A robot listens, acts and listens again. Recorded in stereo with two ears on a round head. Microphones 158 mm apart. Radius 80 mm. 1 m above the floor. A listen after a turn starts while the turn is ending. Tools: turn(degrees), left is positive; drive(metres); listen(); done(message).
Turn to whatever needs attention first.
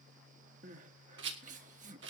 turn(degrees=-45)
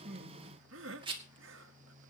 turn(degrees=-90)
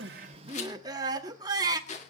turn(degrees=-20)
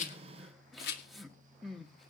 done("Facing the crying.")